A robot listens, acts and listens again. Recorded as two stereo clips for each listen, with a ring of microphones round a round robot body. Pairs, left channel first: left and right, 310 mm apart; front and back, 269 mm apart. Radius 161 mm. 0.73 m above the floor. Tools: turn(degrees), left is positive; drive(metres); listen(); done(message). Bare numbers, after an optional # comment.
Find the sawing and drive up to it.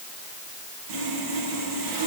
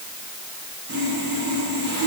# The sawing: 120° right.
turn(-120)
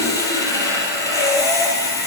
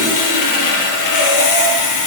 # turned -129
# The sawing is now 10° left.
turn(10)
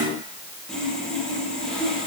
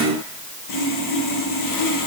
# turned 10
drive(1.0)
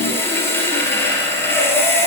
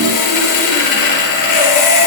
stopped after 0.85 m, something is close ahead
done("Blocked. The sawing is further on, straight ahead.")